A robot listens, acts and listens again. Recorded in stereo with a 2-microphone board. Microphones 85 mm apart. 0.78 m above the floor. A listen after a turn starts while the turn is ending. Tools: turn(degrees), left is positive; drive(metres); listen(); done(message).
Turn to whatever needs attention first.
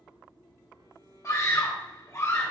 turn(degrees=35)
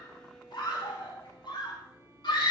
turn(degrees=110)
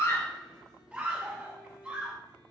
turn(degrees=-15)
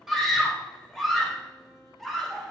done("Facing the scream, 2 to 4 m away.")